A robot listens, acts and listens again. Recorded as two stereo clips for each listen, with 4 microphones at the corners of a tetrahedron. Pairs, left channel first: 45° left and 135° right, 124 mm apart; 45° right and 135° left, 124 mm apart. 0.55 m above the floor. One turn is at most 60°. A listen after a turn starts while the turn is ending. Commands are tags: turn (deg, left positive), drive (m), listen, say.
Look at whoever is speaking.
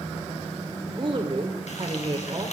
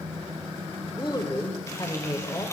<turn deg="-60"/>
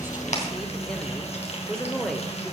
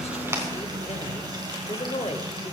<turn deg="-40"/>
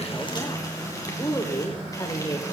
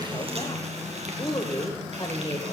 <say>Facing the woman speaking.</say>